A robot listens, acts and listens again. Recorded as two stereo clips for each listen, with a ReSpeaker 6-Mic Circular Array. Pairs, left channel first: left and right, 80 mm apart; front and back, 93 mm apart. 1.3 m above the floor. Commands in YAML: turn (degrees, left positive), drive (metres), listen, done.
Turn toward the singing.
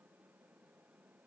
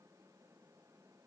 listen: true
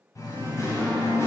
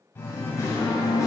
turn: 45
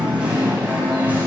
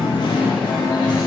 turn: -25
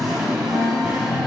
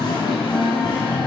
turn: -10
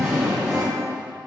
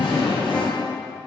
done: "Found it: singing, straight ahead."